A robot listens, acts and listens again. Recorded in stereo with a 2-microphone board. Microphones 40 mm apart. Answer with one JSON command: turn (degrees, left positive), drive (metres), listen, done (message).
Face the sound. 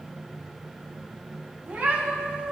{"turn": -60}
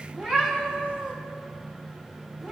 {"turn": -35}
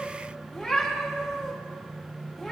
{"turn": 10}
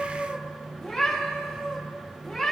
{"done": "Found it: a cat meowing, straight ahead, 1 to 2 m away."}